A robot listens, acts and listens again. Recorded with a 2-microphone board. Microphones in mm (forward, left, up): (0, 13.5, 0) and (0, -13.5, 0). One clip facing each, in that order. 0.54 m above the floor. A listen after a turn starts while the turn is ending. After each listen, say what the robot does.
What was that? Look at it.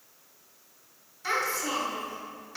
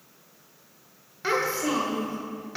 Turn 15° right.
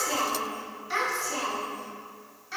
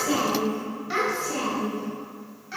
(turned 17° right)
Turn 30° right.
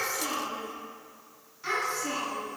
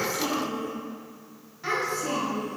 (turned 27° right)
Turn 25° right.
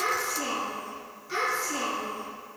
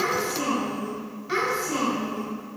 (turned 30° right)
Turn 125° right.
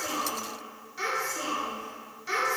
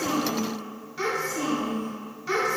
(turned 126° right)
Facing the child speaking, 2 to 4 m away.